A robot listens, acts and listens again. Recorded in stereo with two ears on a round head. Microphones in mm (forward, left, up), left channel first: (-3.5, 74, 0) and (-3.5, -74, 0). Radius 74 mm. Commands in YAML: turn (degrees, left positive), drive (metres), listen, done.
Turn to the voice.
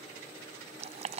listen: true
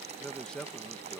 turn: 30
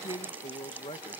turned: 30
turn: 145
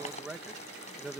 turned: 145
done: "Facing the man speaking."